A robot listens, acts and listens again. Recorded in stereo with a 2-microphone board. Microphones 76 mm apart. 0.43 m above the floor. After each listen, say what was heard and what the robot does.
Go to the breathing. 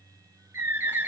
Keep listening.
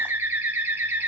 Keep listening.
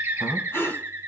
The breathing: about 35° left or 145° left. Turn 35° left.
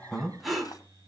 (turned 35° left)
Drive 1.0 m forward.
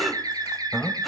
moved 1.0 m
Drive 1.0 m forward.
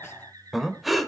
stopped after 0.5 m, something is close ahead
Arrived at the breathing, straight ahead.